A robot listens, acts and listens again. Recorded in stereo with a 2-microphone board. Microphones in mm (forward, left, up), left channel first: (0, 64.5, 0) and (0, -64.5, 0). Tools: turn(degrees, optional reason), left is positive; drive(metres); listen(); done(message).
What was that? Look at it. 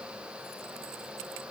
listen()
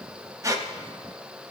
turn(degrees=-25, reason="The squeak: about 25° right or 155° right.")
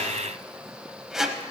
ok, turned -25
done("Found it: a squeak, straight ahead, under 1 m away.")